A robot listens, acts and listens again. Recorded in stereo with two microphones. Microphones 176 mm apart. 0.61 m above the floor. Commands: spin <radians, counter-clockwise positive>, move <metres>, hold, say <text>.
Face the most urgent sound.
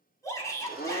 spin 0.35
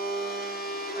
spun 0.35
hold
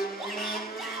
say Facing the shout, over 4 m away.